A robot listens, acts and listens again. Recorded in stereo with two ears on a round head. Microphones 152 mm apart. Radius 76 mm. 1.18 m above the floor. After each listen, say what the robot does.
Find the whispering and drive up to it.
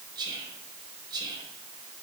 Turn 25° right.
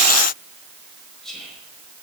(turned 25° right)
Drive 1.0 m forward.
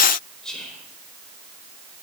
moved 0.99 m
Drive 1.0 m forward.
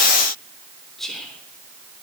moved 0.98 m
Drive 1.0 m forward.
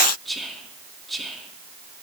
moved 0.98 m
Drive 1.0 m forward.
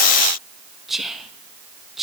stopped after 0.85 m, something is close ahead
I am next to the whispering.